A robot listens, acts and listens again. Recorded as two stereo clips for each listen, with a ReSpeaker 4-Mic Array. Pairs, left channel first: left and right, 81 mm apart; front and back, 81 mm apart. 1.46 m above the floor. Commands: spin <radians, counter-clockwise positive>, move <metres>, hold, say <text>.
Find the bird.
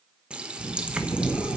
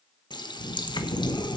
spin 0.52
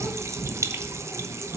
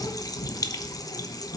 say Facing the bird, 2 to 4 m away.